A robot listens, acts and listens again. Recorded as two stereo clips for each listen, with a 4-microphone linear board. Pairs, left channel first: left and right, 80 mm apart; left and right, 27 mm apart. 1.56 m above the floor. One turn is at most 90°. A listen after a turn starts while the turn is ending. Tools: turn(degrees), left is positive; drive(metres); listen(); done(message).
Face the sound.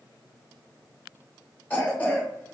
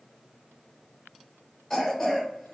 turn(degrees=20)
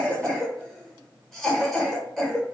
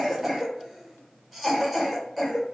done("Facing the cough.")